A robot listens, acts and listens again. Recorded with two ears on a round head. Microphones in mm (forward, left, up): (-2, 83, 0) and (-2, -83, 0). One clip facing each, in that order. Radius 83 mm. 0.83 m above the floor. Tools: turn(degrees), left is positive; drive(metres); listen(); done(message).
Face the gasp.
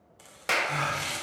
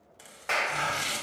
turn(degrees=90)
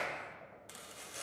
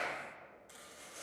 done("Facing where the gasp came from. I can't hear it now.")